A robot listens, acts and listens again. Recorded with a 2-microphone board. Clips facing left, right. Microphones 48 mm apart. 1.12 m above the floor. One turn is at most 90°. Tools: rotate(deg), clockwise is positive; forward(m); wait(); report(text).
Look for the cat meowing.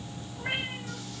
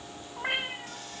rotate(65)
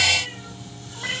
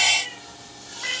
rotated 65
report("Found it: a cat meowing, straight ahead.")